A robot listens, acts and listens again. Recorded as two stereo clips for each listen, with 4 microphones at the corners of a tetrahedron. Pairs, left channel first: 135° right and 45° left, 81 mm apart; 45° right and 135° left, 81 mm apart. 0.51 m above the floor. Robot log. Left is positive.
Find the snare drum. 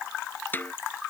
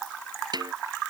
note: The snare drum: 160° left.
cmd yaw +160
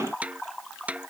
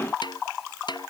note: The snare drum is now 30° right.
cmd yaw -30
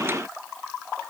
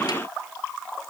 cmd idle
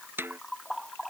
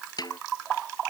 note: The snare drum is now 15° right.
cmd yaw -15
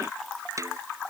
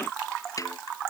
end: Facing the snare drum.